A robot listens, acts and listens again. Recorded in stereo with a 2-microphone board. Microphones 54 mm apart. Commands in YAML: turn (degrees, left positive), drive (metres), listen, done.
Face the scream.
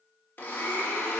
listen: true
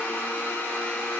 listen: true
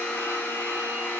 done: "I can't make out a scream to turn to."